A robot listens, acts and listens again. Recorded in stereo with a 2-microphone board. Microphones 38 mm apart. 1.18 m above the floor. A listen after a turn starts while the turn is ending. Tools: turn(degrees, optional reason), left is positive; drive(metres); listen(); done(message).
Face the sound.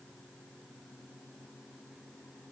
listen()
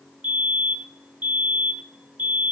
turn(degrees=-50, reason="The fire alarm: about 50° right or 130° right.")
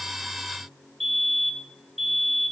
done("Facing the fire alarm, 2 to 4 m away.")